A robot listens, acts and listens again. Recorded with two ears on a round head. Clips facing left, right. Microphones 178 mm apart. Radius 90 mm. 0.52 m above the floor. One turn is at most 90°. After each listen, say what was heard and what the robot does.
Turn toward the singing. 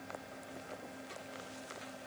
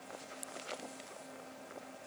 Keep listening.
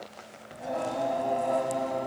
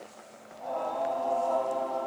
The singing: about 25° left or 155° left. Turn 25° left.
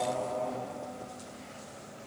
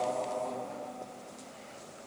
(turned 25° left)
Found it: singing, straight ahead.